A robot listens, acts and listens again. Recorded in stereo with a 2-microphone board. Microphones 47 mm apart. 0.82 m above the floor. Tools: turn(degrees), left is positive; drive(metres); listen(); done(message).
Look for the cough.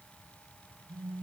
listen()
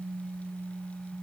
listen()
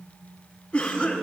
turn(degrees=35)
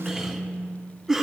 done("Found it: a cough, straight ahead, 1 to 2 m away.")